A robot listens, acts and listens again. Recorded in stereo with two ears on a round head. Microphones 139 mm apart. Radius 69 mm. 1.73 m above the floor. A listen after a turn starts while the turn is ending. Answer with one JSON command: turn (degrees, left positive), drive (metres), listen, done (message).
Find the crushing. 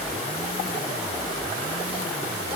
{"listen": true}
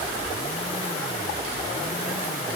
{"listen": true}
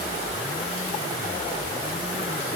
{"done": "I can't make out crushing to turn to."}